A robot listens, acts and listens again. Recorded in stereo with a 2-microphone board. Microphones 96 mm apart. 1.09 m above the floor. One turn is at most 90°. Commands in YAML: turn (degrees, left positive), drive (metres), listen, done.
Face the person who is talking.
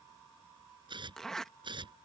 listen: true
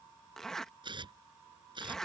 listen: true
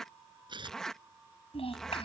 turn: 90
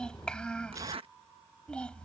turn: 10
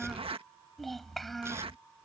done: "Found it: a child speaking, straight ahead."